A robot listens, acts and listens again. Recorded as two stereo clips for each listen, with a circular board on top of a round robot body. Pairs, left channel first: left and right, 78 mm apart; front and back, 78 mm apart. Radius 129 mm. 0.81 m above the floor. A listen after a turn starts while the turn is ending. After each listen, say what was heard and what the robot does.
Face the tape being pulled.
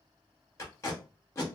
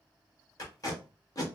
The tape being pulled: 40° left. Turn 40° left.
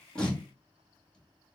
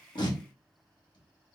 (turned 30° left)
The tape being pulled is now 10° left. Turn 10° left.
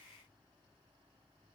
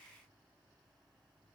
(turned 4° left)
Keep listening.
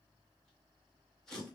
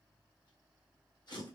Found it: tape being pulled, straight ahead, 1 to 2 m away.